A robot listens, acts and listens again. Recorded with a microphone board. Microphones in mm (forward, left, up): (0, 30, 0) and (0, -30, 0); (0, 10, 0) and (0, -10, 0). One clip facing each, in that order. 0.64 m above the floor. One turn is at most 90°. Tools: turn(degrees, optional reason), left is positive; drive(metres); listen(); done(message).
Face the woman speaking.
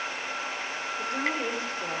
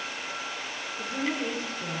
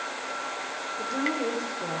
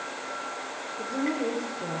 turn(degrees=25, reason="The woman speaking: about 25° left or 155° left.")
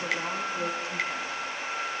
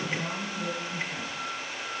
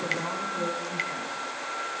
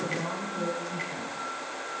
listen()
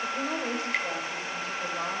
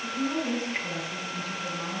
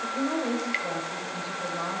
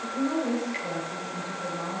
turn(degrees=90, reason="So it is at 120° left.")
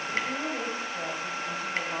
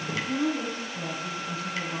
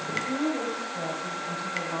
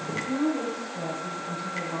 turn(degrees=45, reason="The woman speaking is now 45° left.")
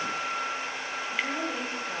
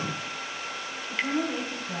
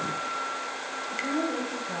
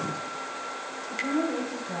turn(degrees=10, reason="The woman speaking is now 10° left.")
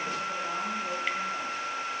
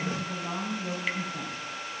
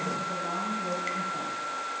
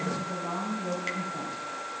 done("Found it: a woman speaking, straight ahead, 2 to 4 m away.")